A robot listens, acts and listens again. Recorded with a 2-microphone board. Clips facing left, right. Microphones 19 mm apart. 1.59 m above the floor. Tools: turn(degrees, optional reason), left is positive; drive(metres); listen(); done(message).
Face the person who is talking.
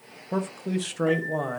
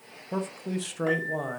turn(degrees=15, reason="The man speaking: about 15° left or 165° left.")
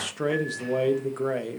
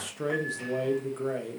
turn(degrees=145, reason="So it is at 145° left.")
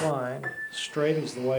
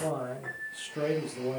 turn(degrees=60, reason="The man speaking is now 60° left.")
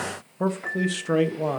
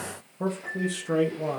turn(degrees=30, reason="The man speaking is now 30° left.")
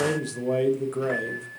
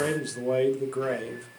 turn(degrees=-10, reason="The man speaking is now 10° right.")
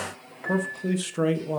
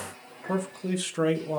done("Facing the man speaking, 1 to 2 m away.")